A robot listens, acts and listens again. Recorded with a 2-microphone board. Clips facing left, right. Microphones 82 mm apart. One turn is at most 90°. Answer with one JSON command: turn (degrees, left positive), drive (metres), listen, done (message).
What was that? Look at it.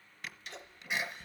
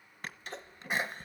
{"turn": -40}
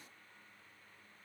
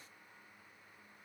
{"listen": true}
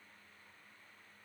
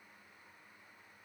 {"done": "I heard a sneeze, but can't make it out now. It was about straight ahead or 100° right."}